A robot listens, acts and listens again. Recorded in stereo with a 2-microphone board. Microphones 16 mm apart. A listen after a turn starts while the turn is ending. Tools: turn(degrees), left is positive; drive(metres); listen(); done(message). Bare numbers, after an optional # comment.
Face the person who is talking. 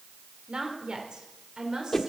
# The woman speaking: about 55° right or 125° right.
turn(-55)
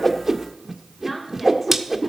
listen()
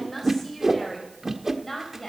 # So it is at 15° left.
turn(15)
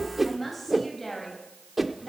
# The woman speaking is now 10° left.
turn(10)
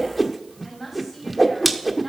done("Found it: a woman speaking, straight ahead, over 4 m away.")